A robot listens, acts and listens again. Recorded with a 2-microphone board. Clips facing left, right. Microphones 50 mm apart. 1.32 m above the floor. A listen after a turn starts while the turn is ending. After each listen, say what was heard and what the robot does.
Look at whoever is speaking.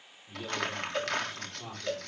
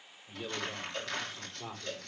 Turn 30° right.
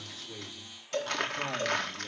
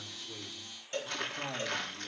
Keep listening.
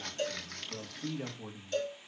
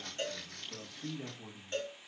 So it is at 40° left. Turn 40° left.
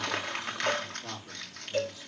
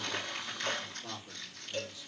The man speaking is now 20° left. Turn 20° left.
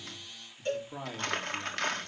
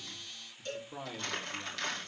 The man speaking is now 10° left. Turn 10° left.
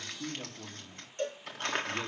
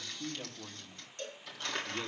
Found it: a man speaking, straight ahead.